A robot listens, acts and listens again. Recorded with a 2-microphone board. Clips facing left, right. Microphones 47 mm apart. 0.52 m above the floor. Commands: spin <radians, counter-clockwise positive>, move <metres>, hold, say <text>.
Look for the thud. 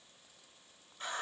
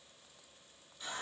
hold
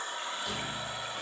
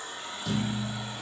spin 0.52
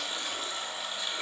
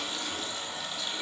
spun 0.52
hold
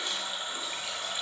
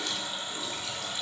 say I heard a thud, but can't make it out now. It was about 25° right or 145° left.